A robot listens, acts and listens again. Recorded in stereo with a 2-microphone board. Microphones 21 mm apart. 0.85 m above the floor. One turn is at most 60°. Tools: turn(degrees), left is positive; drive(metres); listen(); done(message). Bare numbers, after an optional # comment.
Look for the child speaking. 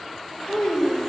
# The child speaking: about 35° left or 145° left.
turn(35)
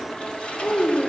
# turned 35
# So it is at 120° left.
turn(60)
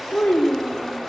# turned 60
# The child speaking is now 75° left.
turn(60)
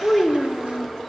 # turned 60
# The child speaking is now 25° left.
turn(25)
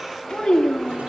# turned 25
# The child speaking is now 40° left.
turn(40)
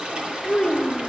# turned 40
# The child speaking is now 10° left.
turn(10)
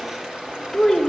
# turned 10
done("Found it: a child speaking, straight ahead, 1 to 2 m away.")